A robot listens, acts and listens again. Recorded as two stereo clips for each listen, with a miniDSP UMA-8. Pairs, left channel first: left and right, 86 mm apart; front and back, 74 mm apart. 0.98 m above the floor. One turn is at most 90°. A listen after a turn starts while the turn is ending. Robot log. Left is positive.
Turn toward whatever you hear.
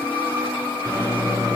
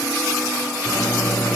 note: The microwave: 40° right.
cmd yaw -40
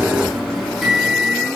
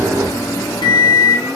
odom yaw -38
end: Facing the microwave, 2 to 4 m away.